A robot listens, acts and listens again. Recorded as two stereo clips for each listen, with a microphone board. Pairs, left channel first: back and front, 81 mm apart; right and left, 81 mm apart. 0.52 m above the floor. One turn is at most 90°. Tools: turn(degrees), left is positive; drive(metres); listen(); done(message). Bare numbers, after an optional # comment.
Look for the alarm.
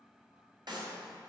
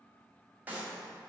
listen()
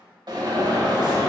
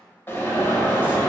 # The alarm: 25° right.
turn(-25)
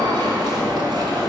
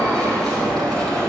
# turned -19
# The alarm is now 10° right.
turn(-10)
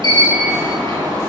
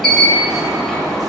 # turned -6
done("Found it: an alarm, straight ahead, 1 to 2 m away.")